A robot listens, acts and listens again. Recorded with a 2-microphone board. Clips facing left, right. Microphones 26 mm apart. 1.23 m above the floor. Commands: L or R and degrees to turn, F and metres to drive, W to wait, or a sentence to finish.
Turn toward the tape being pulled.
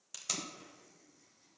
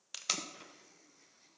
R35
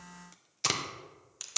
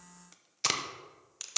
R10
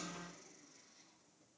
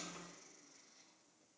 W
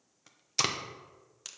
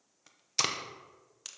Found it: tape being pulled, straight ahead, under 1 m away.